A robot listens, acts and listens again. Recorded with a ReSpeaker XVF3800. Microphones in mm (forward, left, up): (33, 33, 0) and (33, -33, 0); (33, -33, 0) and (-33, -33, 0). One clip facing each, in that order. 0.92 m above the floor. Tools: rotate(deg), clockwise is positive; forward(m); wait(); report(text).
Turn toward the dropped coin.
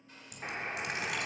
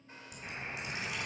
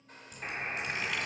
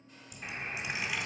rotate(-105)
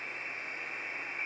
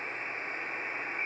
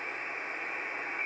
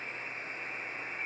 report("I heard a dropped coin from this way, but can't make it out now.")